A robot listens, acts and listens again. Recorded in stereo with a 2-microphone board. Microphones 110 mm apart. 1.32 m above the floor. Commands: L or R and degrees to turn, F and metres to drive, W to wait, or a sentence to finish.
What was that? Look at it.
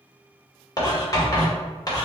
L35
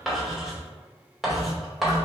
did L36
Facing the writing, 1 to 2 m away.